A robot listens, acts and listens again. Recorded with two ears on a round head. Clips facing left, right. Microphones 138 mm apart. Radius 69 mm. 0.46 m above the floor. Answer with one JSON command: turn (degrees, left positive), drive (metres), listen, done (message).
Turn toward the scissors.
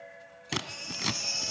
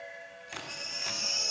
{"turn": 90}
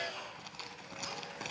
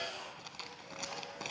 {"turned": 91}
{"done": "Facing the scissors."}